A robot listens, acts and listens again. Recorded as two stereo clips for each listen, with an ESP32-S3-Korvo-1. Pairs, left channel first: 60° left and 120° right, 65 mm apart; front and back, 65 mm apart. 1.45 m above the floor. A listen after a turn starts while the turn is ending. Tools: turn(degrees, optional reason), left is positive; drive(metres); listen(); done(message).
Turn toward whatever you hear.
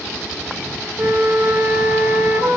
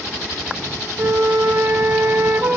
turn(degrees=-155, reason="The flute: 155° right.")
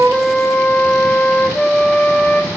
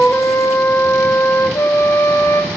turn(degrees=-10, reason="The flute is now 10° right.")
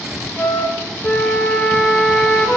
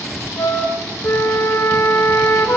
done("Found it: a flute, straight ahead.")